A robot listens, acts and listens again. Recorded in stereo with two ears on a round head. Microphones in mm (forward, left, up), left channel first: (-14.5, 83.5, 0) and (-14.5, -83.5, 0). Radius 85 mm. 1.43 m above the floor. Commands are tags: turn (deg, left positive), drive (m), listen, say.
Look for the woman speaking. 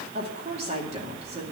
<turn deg="-30"/>
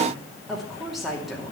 <say>Facing the woman speaking, 2 to 4 m away.</say>